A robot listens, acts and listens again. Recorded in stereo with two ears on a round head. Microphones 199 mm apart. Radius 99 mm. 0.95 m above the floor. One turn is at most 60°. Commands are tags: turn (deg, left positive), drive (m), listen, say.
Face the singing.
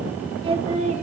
<turn deg="-30"/>
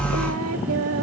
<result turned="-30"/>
<turn deg="-60"/>
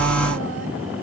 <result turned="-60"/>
<turn deg="-50"/>
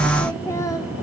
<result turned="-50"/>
<turn deg="15"/>
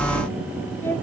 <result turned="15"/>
<turn deg="10"/>
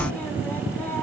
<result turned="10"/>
<listen/>
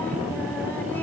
<listen/>
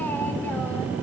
<say>I heard singing from this way, but can't make it out now.</say>